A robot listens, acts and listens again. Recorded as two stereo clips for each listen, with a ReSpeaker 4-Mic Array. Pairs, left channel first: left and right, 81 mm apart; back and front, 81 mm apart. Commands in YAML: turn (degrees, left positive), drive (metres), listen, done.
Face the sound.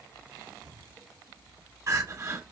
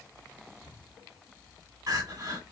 turn: -40
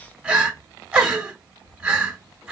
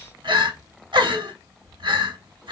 turn: -10
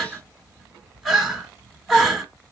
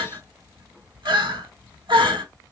done: "Facing the crying, 1 to 2 m away."